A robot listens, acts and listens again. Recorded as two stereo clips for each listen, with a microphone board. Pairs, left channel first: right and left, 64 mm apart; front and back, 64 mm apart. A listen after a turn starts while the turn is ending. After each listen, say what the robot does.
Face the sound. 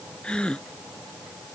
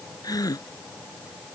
Turn 15° right.
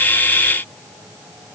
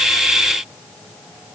Facing where the gasp came from. I can't hear it now.